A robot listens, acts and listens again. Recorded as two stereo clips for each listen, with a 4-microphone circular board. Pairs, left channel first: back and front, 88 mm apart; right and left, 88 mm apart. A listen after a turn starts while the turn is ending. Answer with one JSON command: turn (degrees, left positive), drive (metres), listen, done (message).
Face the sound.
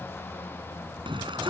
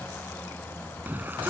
{"turn": 20}
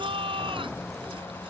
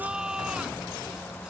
{"turn": 10}
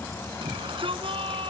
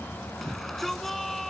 {"done": "Facing the shout."}